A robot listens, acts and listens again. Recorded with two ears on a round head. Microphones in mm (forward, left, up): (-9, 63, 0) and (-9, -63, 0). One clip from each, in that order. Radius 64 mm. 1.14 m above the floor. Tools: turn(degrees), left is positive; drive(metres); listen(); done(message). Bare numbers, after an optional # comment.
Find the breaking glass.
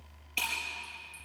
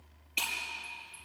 turn(30)
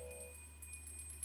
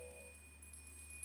listen()
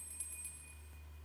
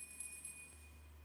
done("I heard breaking glass, but can't make it out now. It was about 25° right or 145° left.")